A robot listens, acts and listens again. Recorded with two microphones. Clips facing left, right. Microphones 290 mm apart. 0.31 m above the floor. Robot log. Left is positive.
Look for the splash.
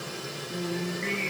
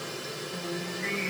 cmd idle
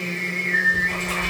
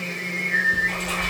cmd yaw -90
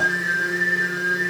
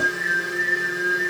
end: I heard a splash from this way, but can't make it out now.